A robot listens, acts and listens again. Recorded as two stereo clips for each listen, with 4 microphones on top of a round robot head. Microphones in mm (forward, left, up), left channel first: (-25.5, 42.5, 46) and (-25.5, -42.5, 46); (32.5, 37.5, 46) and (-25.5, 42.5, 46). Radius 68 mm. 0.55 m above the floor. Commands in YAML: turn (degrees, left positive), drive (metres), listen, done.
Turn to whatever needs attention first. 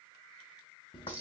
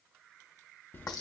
listen: true
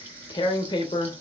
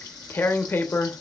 listen: true
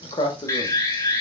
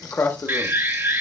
turn: 135
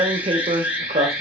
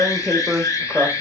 turn: -10
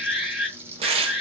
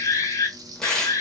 done: "Facing the alarm, 1 to 2 m away."